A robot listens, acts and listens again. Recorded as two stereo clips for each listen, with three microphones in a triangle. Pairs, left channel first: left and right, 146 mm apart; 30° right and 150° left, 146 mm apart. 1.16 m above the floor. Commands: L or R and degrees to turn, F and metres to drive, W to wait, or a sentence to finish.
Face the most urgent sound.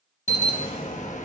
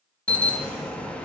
L50
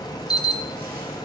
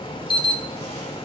L25
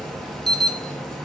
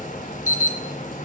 Found it: an alarm, straight ahead.